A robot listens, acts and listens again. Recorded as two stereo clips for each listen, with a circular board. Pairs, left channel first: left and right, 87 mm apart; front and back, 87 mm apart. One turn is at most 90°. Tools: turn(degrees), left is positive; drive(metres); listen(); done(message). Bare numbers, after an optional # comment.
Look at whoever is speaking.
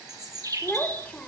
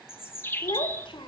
# The child speaking: 15° left.
turn(15)
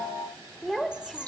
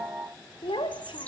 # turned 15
done("Found it: a child speaking, straight ahead, 1 to 2 m away.")